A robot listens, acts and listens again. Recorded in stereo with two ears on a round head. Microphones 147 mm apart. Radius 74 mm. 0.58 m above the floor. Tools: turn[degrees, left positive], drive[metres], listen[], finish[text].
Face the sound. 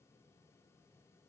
Action: listen[]
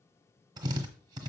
Thought: The drill: about 25° right or 155° right.
Action: turn[-25]
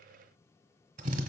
Thought: So it is at 130° right.
Action: turn[-130]
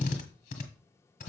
Thought: The drill is now 45° left.
Action: turn[45]
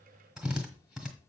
Action: finish[Facing the drill, 1 to 2 m away.]